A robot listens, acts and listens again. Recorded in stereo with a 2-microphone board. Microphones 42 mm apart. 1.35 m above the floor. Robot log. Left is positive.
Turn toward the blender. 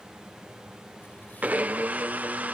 note: The blender: about 40° right or 140° right.
cmd yaw -40
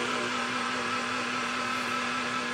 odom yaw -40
end: Facing the blender.